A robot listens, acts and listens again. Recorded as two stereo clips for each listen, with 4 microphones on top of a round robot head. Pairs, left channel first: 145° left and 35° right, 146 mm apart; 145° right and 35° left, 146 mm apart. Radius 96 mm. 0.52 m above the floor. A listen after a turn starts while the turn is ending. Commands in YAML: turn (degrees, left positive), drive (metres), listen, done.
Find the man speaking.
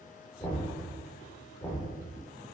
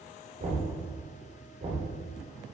listen: true
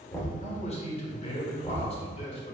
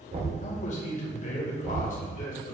turn: -170
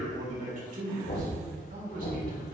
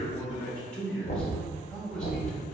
turn: -60
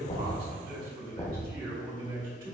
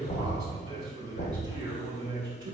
turn: -25
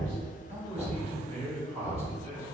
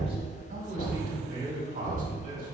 turn: 10
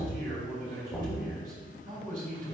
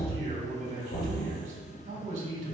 done: "Facing the man speaking."